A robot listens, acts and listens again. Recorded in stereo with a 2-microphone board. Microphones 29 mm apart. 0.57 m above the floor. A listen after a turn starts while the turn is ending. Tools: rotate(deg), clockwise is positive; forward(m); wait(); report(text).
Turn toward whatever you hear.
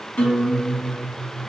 rotate(-65)
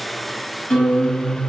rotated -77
rotate(-35)
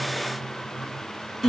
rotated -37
report("Found it: a guitar, straight ahead, 1 to 2 m away.")